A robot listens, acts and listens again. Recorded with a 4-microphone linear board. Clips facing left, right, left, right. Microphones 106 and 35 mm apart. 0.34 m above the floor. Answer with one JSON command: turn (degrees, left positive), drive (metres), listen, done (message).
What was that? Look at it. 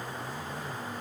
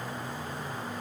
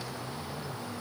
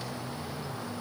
{"listen": true}
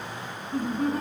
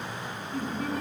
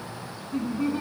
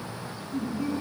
{"turn": 40}
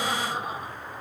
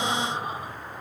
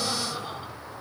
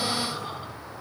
{"listen": true}
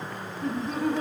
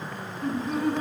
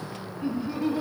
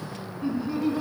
{"turn": 10}
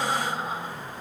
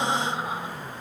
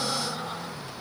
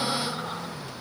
{"listen": true}
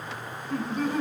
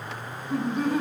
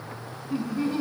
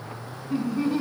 {"done": "Found it: laughter, straight ahead, 1 to 2 m away."}